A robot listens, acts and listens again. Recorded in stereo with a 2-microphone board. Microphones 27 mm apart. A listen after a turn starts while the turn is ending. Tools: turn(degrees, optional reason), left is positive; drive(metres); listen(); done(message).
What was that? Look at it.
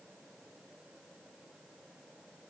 listen()
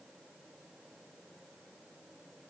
listen()
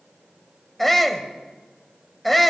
turn(degrees=30)
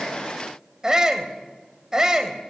turn(degrees=-25, reason="So it is at 25° right.")
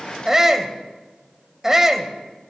turn(degrees=-15, reason="The shout is now 15° right.")
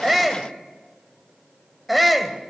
done("Found it: a shout, straight ahead.")